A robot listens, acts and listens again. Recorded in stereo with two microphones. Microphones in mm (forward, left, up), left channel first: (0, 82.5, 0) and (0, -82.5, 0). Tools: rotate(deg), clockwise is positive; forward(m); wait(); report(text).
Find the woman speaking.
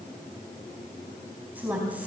rotate(30)
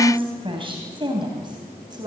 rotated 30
rotate(150)
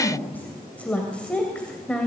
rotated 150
report("Found it: a woman speaking, straight ahead, 2 to 4 m away.")